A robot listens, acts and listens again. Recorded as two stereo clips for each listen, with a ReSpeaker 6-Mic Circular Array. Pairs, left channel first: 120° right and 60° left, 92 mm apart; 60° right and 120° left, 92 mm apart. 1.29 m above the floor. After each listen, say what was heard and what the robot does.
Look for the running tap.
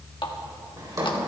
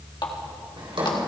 The running tap: 90° right. Turn 90° right.
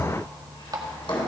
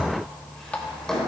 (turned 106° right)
The running tap is now 15° left. Turn 15° left.
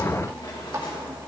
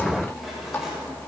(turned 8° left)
Found it: a running tap, straight ahead.